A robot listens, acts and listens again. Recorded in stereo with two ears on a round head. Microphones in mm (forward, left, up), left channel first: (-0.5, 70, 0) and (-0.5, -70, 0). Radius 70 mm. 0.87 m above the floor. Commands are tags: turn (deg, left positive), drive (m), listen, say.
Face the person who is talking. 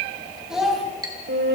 <turn deg="-30"/>
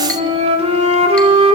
<listen/>
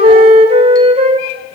<listen/>
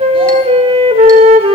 <say>I heard a child speaking, but can't make it out now. It was about 25° left or 145° right.</say>